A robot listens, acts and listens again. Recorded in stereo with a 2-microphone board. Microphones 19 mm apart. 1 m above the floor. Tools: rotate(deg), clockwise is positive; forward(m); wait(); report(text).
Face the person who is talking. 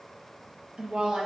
rotate(90)
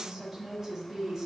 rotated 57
rotate(25)
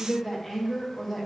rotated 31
rotate(-10)
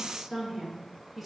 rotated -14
report("Found it: a woman speaking, straight ahead, 1 to 2 m away.")